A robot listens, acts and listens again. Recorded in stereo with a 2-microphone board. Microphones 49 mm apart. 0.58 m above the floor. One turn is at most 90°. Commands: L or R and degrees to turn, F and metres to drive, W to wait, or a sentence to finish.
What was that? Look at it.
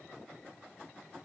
W
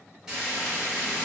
R30
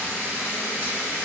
R90
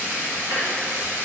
R50
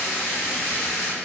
L10
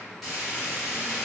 Found it: frying, straight ahead.